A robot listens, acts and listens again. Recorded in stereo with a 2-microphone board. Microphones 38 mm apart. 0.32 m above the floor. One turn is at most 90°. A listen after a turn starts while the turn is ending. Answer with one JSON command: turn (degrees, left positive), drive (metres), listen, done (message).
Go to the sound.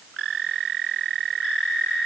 {"listen": true}
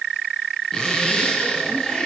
{"turn": 30}
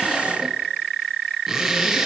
{"drive": 1.0}
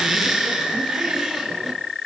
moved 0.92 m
{"drive": 1.0}
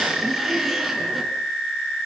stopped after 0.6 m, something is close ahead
{"done": "Something is in my way. I am facing the zipper but have not reached it."}